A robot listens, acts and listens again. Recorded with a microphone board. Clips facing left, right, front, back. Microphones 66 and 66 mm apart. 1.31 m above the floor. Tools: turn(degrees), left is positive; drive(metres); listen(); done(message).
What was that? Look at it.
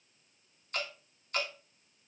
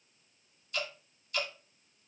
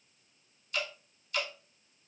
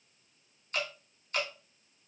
turn(degrees=130)
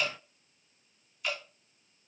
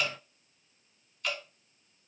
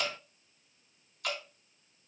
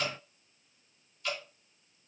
done("Found it: dripping, straight ahead.")